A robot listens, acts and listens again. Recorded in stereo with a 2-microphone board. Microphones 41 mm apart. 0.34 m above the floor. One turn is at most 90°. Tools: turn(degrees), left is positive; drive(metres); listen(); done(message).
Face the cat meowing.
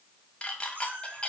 turn(degrees=-45)
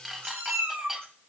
turn(degrees=-90)
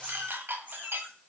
turn(degrees=-40)
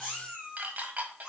turn(degrees=-10)
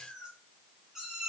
done("Facing the cat meowing.")